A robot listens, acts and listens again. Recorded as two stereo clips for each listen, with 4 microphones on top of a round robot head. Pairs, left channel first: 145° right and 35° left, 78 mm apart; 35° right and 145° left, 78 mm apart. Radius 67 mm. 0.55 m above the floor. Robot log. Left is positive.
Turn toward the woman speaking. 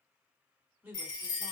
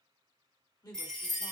note: The woman speaking: 25° right.
cmd yaw -25
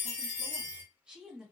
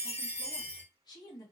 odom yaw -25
note: The woman speaking is now 40° right.
cmd yaw -40
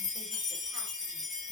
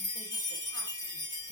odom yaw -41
cmd idle
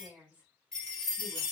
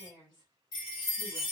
note: The woman speaking is now 30° right.
cmd yaw -30
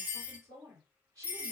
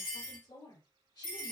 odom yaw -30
end: Facing the woman speaking.